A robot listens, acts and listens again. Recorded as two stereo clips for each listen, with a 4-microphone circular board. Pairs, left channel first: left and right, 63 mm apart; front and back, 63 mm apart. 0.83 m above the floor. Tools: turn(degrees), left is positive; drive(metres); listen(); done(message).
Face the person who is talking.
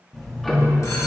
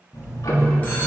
listen()
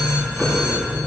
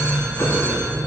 listen()
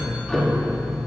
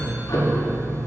done("I can't make out anyone speaking to turn to.")